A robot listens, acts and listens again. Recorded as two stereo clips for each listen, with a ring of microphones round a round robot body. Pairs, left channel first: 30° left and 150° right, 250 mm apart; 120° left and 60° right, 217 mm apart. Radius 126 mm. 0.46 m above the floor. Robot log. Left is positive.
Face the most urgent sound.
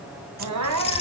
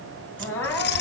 note: The crying: 160° right.
cmd yaw -160
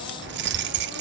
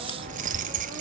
cmd idle
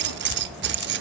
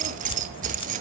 cmd idle
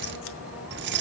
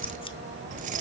end: I heard crying from this way, but can't make it out now.